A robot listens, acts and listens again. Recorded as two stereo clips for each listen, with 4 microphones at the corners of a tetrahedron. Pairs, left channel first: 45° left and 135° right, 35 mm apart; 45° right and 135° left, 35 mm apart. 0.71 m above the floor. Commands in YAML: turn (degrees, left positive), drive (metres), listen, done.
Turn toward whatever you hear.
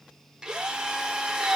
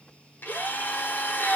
turn: -65
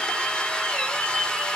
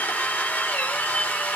turn: -20
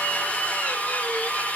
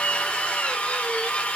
done: "Found it: a drill, straight ahead, 1 to 2 m away."